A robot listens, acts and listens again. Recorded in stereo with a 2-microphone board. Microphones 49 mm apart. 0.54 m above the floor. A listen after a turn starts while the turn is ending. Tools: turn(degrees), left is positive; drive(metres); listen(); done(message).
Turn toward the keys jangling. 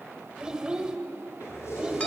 turn(degrees=90)
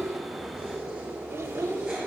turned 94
turn(degrees=-15)
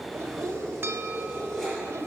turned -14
done("Facing the keys jangling.")